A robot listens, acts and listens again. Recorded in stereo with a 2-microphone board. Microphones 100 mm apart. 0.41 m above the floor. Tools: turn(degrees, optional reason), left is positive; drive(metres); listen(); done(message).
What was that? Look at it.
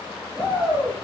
turn(degrees=-20, reason="The shout: about 20° right or 160° right.")
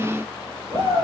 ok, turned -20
turn(degrees=-135, reason="So it is at 135° right.")
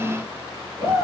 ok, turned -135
turn(degrees=-25, reason="The shout is now 25° right.")
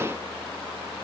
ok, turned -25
listen()
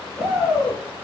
done("Facing the shout, over 4 m away.")